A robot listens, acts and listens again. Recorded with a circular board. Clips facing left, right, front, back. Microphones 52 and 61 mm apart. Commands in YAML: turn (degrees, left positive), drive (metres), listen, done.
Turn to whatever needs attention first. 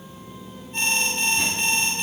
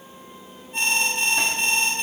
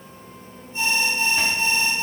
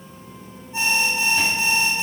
turn: -170
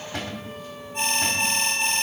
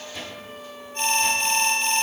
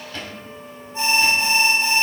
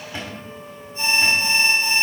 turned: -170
turn: 15
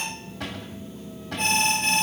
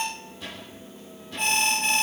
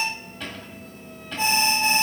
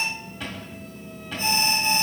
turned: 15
done: "Facing the alarm, 2 to 4 m away."